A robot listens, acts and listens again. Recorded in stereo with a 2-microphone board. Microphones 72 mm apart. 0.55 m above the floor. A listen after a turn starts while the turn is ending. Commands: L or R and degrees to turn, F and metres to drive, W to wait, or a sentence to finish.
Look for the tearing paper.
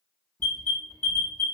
W
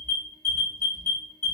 W
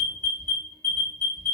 I can't make out tearing paper to turn to.